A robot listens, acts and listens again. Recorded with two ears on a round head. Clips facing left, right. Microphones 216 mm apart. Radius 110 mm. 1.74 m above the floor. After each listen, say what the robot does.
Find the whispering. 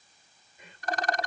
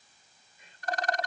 Turn 55° left.
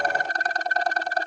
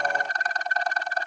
Keep listening.
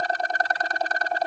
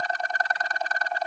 Keep listening.
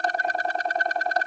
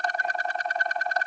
I heard whispering, but can't make it out now. It was about straight ahead or 70° left.